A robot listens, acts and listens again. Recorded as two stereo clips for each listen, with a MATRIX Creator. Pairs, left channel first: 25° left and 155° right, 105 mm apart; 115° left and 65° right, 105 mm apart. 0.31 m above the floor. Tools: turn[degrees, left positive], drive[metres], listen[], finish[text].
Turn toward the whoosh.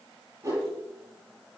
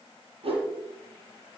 Thought: The whoosh: 100° right.
Action: turn[-100]
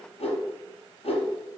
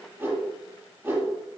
Action: finish[Found it: a whoosh, straight ahead, 2 to 4 m away.]